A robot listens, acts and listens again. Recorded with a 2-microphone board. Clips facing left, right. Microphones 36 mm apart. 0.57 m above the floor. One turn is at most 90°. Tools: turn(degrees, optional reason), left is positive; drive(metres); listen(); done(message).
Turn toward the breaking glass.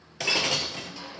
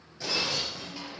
turn(degrees=75, reason="The breaking glass: about 75° left or 105° left.")
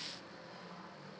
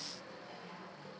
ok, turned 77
listen()
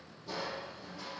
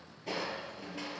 done("I heard breaking glass, but can't make it out now. It was about 5° right or 30° left.")